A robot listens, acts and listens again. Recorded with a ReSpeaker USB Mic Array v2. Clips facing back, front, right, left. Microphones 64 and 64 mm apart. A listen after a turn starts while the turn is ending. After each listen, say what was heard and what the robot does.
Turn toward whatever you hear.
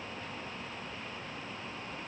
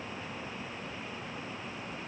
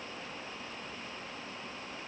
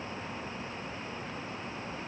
Keep listening.
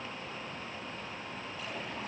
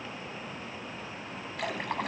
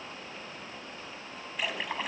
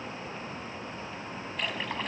Found it: a splash, straight ahead.